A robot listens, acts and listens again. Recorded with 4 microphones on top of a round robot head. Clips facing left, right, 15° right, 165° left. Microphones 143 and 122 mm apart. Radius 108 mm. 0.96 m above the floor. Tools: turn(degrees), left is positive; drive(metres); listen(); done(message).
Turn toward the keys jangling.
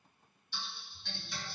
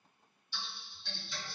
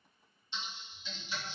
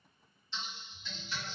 listen()
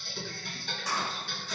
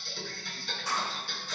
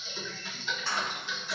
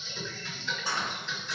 turn(degrees=90)
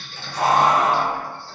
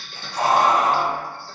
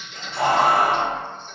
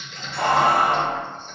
turn(degrees=-15)
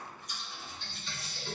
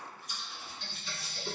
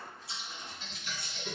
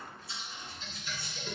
listen()
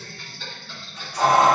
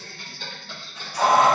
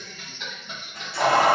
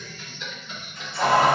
done("Facing the keys jangling.")